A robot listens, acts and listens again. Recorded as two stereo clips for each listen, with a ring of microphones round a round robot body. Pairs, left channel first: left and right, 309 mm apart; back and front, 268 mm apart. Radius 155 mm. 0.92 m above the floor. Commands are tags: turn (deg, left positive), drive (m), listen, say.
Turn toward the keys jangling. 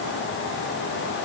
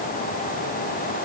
<listen/>
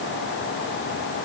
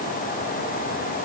<listen/>
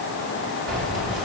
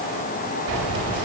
<say>Found it: keys jangling, straight ahead.</say>